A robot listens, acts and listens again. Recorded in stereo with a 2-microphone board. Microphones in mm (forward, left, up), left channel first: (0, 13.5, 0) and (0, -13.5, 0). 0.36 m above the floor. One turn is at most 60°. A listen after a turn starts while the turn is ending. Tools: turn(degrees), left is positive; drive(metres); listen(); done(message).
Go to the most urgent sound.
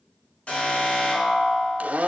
turn(degrees=45)
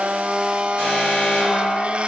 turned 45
turn(degrees=60)
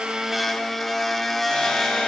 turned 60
turn(degrees=30)
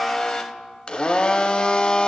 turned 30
listen()
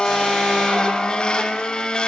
listen()
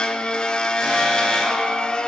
done("Facing where the alarm came from. I can't hear it now. I did not reach it.")